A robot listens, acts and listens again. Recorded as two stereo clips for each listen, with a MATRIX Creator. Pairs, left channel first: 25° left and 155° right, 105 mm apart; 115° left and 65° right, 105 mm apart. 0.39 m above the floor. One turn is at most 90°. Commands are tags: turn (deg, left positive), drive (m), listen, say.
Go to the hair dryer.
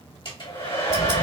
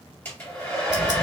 <turn deg="45"/>
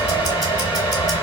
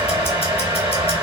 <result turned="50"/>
<drive m="1.0"/>
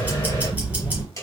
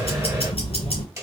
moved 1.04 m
<turn deg="-20"/>
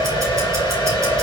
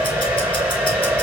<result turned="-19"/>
<drive m="1.0"/>
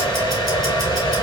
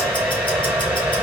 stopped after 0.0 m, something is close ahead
<say>I am next to the hair dryer.</say>